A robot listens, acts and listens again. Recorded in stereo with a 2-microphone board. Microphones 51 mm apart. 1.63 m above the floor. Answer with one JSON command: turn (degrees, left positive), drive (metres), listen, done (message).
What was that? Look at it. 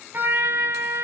{"turn": -45}
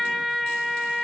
{"done": "Found it: a trumpet, straight ahead."}